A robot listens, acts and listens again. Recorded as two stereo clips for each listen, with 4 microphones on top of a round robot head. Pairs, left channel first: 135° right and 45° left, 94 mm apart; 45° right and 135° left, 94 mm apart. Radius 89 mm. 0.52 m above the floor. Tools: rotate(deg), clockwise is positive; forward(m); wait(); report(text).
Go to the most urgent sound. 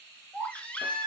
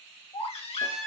rotate(60)
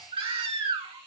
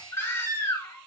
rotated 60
rotate(-15)
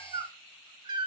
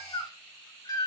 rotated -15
forward(1.0)
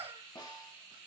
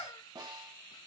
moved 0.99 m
wait()
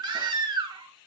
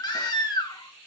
forward(1.0)
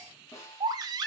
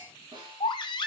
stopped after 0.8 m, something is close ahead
report("I am next to the baby crying.")